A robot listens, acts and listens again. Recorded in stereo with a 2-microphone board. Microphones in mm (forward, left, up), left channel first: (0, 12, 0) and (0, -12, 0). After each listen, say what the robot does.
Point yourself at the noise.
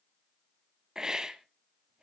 Turn 25° right.
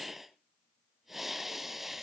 Found it: a hiss, straight ahead.